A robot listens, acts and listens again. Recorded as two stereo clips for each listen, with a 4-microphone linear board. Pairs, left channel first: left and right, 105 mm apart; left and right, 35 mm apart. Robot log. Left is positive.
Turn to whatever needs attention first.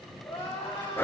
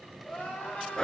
note: The crying: about 30° left or 150° left.
cmd yaw +30
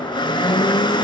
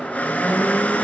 cmd idle
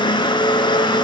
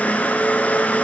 cmd idle
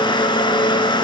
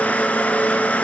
end: I heard crying, but can't make it out now. It was about straight ahead or 120° left.